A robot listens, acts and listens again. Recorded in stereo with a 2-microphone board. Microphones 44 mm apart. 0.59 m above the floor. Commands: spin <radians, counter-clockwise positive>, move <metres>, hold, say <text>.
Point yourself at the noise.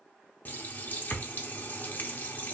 spin 0.87
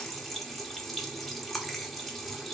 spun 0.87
say Facing the running tap, under 1 m away.